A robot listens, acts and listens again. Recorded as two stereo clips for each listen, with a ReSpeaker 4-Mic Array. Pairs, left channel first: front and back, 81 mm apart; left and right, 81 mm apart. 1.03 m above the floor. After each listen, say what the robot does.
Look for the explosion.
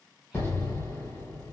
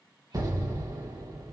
Turn 55° right.
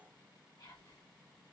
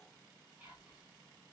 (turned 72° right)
Turn 20° left.
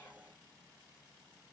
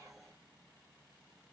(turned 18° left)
Facing where the explosion came from. I can't hear it now.